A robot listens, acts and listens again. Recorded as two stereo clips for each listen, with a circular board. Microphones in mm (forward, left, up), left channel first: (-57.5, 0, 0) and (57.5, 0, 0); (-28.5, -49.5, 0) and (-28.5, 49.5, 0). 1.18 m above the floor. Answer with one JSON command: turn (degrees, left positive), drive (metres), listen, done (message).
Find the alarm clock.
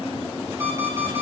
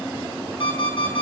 {"turn": -70}
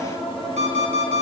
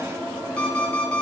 {"turn": -10}
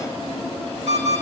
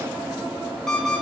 {"done": "Found it: an alarm clock, straight ahead."}